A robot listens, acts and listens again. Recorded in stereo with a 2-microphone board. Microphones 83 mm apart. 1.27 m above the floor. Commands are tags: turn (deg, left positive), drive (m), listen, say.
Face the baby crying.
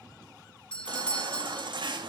<turn deg="-70"/>
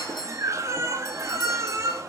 <turn deg="-40"/>
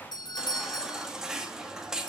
<say>Found it: a baby crying, straight ahead, 2 to 4 m away.</say>